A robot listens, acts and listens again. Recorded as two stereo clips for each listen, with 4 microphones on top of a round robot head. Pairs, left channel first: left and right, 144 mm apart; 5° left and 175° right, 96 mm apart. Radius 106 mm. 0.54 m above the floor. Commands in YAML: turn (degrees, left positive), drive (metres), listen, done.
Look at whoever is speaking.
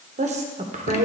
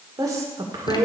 turn: -120
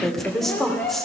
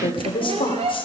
done: "Facing the woman speaking, 2 to 4 m away."